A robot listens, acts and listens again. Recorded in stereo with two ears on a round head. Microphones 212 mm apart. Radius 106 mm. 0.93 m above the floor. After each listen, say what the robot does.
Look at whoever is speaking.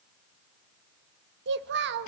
Turn 50° right.
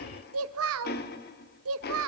Turn 75° right.
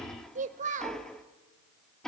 Turn 35° right.
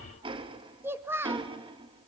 Turn 10° right.
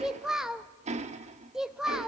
Facing the child speaking.